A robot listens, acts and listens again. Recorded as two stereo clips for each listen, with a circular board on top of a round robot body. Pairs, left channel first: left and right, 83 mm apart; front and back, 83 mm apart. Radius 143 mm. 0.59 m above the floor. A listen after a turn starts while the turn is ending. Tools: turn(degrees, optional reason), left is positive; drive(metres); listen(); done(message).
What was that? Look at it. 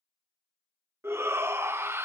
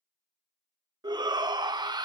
turn(degrees=-150, reason="The shout: 150° right.")
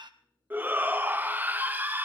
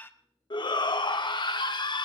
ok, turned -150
turn(degrees=-25, reason="The shout is now 25° right.")
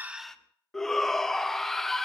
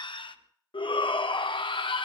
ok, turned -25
done("Facing the shout.")